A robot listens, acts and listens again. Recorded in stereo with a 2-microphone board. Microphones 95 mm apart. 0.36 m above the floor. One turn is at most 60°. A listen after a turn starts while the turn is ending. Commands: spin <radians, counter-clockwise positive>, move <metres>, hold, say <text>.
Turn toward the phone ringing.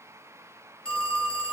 spin 0.52
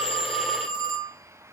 spin 1.05
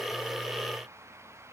spin 1.05
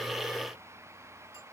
spin 0.35
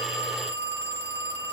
spin 0.44
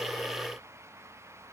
hold
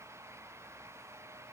hold
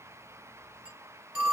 spin -0.17
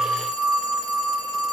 say Facing the phone ringing.